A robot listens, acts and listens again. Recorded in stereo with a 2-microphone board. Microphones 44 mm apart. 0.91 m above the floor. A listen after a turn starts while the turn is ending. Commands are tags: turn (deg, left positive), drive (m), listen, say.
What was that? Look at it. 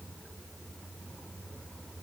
<listen/>
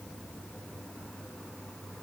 <listen/>
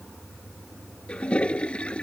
<turn deg="25"/>
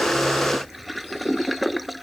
<say>Facing the toilet flushing.</say>